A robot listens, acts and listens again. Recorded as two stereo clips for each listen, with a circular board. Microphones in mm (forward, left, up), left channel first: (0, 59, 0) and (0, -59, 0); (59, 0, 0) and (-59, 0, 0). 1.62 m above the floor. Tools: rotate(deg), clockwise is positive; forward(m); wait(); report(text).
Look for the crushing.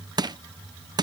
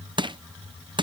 rotate(140)
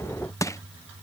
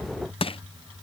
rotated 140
rotate(-30)
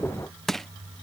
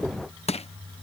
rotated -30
report("Facing the crushing.")